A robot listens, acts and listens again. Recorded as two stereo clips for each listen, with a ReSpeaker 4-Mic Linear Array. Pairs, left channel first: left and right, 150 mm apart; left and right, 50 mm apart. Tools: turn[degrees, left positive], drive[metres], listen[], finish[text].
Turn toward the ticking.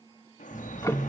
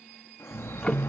Thought: The ticking: about 20° left or 160° left.
Action: turn[20]
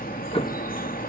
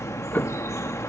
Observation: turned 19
Thought: So it is at 140° left.
Action: turn[140]
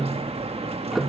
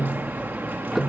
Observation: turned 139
Action: finish[Found it: ticking, straight ahead.]